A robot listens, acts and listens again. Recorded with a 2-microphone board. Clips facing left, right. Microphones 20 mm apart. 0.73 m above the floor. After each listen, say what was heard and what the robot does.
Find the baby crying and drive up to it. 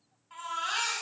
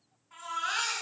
The baby crying: about 45° left or 135° left. Turn 45° left.
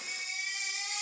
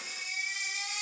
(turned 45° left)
Drive 1.0 m forward.
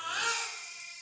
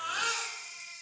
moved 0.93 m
Drive 1.0 m forward.
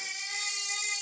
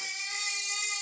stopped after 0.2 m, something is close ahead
I am next to the baby crying.